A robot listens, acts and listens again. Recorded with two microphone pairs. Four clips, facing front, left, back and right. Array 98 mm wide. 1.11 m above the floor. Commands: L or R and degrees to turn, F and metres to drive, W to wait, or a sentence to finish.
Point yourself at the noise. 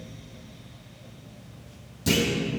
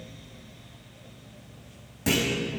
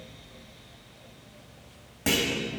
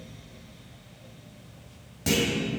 L180
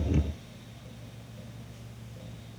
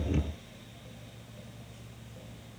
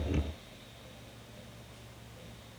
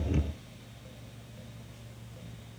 I heard a clunk from this way, but can't make it out now.